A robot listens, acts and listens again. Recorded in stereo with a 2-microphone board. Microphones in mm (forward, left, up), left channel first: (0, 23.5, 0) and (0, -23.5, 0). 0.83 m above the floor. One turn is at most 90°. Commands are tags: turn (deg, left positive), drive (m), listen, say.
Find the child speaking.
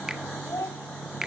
<turn deg="70"/>
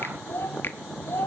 <turn deg="50"/>
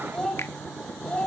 <turn deg="20"/>
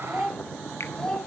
<turn deg="15"/>
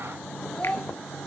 <turn deg="15"/>
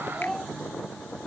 <say>Facing the child speaking.</say>